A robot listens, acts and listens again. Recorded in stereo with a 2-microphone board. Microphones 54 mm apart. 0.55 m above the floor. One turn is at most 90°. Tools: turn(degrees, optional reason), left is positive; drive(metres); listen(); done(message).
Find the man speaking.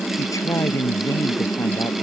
turn(degrees=90)
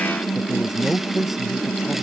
done("Found it: a man speaking, straight ahead.")